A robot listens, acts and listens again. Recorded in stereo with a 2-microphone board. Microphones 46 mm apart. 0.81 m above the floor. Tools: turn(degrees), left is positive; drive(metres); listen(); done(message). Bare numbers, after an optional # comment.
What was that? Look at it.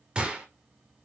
# The gunshot: about 20° right or 160° right.
turn(-20)
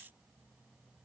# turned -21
listen()
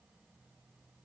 done("I heard a gunshot, but can't make it out now. It was about straight ahead or 135° right.")